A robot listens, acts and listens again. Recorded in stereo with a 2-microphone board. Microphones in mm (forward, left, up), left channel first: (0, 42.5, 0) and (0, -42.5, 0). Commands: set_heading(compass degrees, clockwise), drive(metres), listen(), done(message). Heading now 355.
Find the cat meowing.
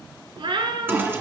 set_heading(70)
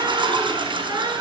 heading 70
set_heading(125)
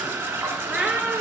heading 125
set_heading(140)
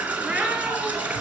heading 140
listen()
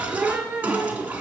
set_heading(160)
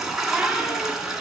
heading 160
listen()
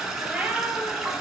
set_heading(175)
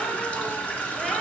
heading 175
listen()
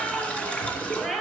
done("Found it: a cat meowing, straight ahead.")